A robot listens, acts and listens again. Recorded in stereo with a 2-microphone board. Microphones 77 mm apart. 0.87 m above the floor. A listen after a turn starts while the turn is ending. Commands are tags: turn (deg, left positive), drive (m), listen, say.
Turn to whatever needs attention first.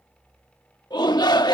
<turn deg="70"/>
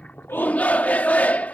<turn deg="20"/>
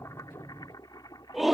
<say>Found it: a shout, straight ahead.</say>